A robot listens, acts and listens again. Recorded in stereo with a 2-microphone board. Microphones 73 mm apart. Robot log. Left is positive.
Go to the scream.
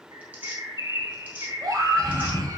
note: The scream: about 60° right or 120° right.
cmd yaw -60
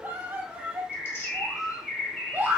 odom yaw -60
note: So it is at 35° right.
cmd yaw -35
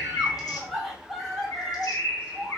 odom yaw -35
cmd fwd 1.0
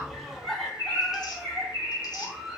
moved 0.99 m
cmd fwd 1.0
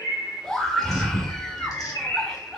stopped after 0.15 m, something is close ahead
note: The scream is now 10° left.
cmd yaw +10
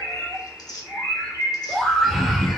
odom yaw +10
end: Arrived at the scream, straight ahead.